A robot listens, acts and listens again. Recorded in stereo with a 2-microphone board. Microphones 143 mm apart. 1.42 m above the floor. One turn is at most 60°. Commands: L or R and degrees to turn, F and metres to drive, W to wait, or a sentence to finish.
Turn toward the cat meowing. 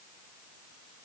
W
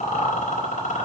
W
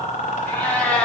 L30
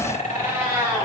R30
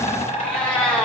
Facing the cat meowing.